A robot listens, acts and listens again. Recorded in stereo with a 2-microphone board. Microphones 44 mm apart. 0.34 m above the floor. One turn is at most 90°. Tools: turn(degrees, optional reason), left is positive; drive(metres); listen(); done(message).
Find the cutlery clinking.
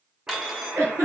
turn(degrees=-30)
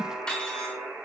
turn(degrees=20, reason="So it is at 20° left.")
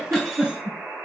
listen()
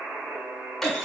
listen()
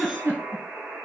done("I heard cutlery clinking from this way, but can't make it out now.")